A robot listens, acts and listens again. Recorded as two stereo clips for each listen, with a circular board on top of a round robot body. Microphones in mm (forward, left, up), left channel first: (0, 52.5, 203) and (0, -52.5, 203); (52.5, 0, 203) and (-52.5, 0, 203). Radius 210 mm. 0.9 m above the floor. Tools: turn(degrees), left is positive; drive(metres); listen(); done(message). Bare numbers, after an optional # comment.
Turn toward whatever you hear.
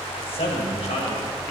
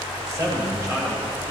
# The man speaking: 120° left.
turn(120)
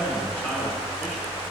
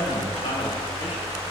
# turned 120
# The man speaking is now 15° left.
turn(15)
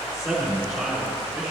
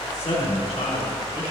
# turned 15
done("Facing the man speaking.")